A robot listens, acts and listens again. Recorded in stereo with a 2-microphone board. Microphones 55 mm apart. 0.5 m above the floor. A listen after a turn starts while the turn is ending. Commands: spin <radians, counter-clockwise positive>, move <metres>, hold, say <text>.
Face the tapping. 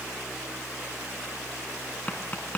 spin 0.52
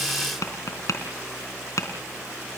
spin 2.09
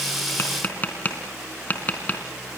spin 0.52
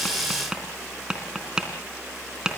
spin -0.26
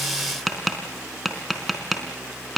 say Facing the tapping.